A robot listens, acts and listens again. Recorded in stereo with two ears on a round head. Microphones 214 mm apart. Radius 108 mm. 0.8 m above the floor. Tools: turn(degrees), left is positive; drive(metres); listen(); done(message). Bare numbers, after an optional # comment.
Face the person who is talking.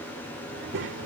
# The child speaking: about 50° right or 130° right.
turn(-50)
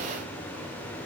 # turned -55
listen()
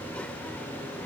listen()
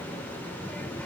done("Found it: a child speaking, straight ahead.")